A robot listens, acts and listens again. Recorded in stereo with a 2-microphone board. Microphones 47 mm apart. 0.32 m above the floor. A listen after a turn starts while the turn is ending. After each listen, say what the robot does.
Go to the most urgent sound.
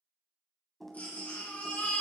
Turn 40° left.
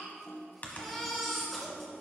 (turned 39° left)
Drive 1.0 m forward.
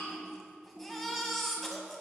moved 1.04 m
Drive 1.0 m forward.
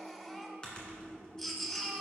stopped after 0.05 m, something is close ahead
I am next to the baby crying.